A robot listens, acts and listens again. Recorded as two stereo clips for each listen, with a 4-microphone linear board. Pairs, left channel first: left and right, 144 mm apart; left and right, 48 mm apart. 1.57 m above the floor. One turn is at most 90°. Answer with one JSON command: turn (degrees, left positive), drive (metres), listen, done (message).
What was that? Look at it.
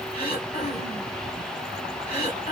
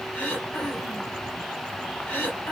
{"turn": 45}
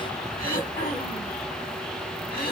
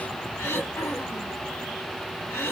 {"turn": 90}
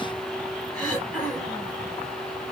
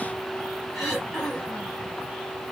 {"done": "Facing the throat clearing, 2 to 4 m away."}